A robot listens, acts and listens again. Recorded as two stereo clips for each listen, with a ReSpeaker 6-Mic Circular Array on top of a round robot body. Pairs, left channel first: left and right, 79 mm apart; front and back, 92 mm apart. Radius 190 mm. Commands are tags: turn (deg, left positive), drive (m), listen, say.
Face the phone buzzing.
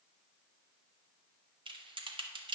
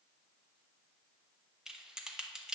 <listen/>
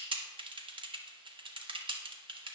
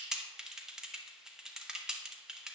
<listen/>
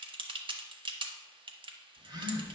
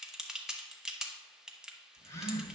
<turn deg="-60"/>
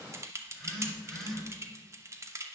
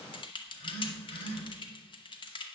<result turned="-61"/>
<say>Found it: a phone buzzing, straight ahead, 1 to 2 m away.</say>